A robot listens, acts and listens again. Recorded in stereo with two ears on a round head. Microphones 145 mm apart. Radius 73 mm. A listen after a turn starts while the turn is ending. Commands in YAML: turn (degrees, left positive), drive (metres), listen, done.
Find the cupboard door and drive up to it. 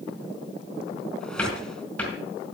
turn: 30
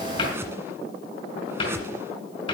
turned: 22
turn: 145
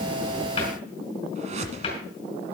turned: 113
turn: 30
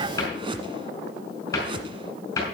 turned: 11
turn: 20
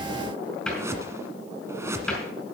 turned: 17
drive: 1.0
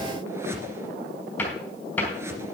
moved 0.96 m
turn: 10
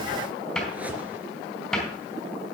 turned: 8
drive: 1.0
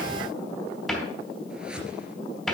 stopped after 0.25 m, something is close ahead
done: "Blocked. The cupboard door is further on, straight ahead."